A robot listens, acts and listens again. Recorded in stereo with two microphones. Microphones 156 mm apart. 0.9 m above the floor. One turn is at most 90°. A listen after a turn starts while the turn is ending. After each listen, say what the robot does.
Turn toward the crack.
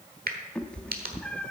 Turn 75° right.
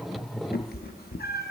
Keep listening.
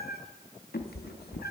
I heard a crack, but can't make it out now. It was about straight ahead or 30° right.